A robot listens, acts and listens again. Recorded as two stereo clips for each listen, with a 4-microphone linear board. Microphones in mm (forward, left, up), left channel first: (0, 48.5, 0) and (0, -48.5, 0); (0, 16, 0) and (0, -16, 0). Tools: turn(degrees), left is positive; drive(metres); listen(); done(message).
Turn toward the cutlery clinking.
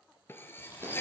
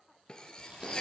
turn(degrees=25)
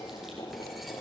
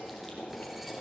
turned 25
listen()
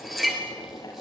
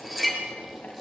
done("Facing the cutlery clinking, 2 to 4 m away.")